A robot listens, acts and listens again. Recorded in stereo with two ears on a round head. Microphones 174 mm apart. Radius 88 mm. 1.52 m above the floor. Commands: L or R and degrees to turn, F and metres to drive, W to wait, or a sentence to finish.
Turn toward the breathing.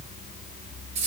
W
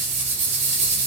W
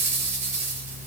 I can't make out breathing, only a rattle.